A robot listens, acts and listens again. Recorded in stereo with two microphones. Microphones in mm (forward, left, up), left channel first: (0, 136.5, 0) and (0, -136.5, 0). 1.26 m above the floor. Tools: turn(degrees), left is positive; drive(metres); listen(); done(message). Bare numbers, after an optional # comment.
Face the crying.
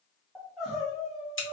turn(30)
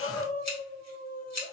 # So it is at 150° left.
turn(150)
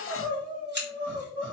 done("Found it: crying, straight ahead.")